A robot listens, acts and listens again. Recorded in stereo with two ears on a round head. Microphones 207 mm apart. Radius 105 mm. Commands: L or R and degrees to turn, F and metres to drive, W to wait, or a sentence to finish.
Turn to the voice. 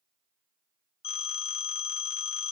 W
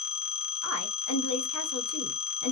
L70
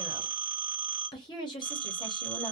L20
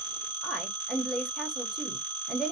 Found it: a woman speaking, straight ahead, 1 to 2 m away.